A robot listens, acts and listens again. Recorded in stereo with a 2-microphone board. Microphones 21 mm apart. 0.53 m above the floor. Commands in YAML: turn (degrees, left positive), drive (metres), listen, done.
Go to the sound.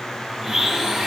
turn: -30
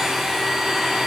turn: -145
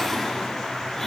listen: true
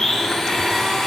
turn: 10
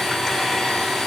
drive: 1.0
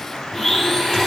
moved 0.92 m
drive: 1.0
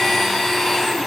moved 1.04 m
turn: 10
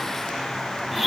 drive: 1.0
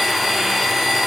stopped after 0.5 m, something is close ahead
done: "I am next to the blender."